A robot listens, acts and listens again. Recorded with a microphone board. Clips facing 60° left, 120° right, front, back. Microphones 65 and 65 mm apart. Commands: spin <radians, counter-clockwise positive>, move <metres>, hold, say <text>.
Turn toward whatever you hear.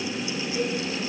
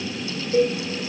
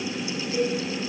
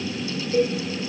spin -2.18
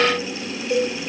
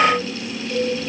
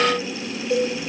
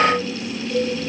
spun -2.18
spin 0.17
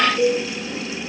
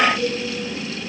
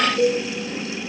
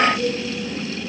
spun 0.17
say Found it: a cowbell, straight ahead, 2 to 4 m away.